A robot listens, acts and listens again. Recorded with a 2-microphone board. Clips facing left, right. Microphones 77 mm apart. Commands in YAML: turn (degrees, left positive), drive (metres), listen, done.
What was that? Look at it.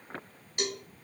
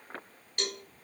turn: 30
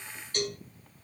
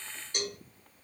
turn: -15
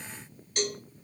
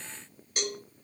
turn: -10
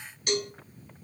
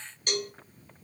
done: "Facing the cowbell."